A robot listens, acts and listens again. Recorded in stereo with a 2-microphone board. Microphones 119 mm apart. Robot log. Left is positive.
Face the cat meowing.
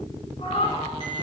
note: The cat meowing: about 65° left or 115° left.
cmd yaw +65
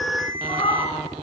note: So it is at 50° left.
cmd yaw +50
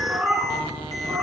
note: The cat meowing is now 10° right.
cmd yaw -10
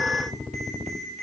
cmd idle
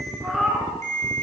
end: Facing the cat meowing.